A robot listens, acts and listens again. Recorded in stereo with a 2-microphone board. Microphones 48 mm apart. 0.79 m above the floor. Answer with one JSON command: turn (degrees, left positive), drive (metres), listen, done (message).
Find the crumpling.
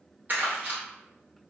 {"turn": -35}
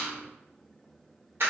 {"turn": -105}
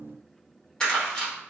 {"turn": 15}
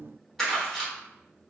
{"done": "Facing the crumpling, 1 to 2 m away."}